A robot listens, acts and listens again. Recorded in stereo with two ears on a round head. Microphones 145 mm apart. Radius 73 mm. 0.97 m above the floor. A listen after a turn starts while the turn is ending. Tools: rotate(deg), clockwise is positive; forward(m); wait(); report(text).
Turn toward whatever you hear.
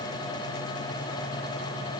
wait()
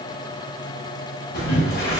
rotate(-70)
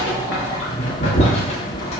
rotate(-40)
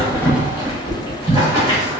rotate(20)
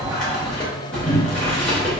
report("Found it: boiling, straight ahead, under 1 m away.")